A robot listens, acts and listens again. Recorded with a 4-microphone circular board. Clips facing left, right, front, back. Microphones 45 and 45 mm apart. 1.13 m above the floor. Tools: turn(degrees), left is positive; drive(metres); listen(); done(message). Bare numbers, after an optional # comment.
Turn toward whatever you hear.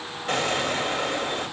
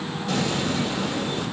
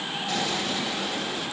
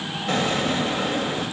# The explosion: 135° left.
turn(135)
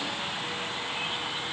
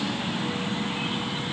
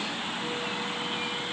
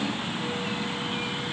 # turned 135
done("Facing where the explosion came from. I can't hear it now.")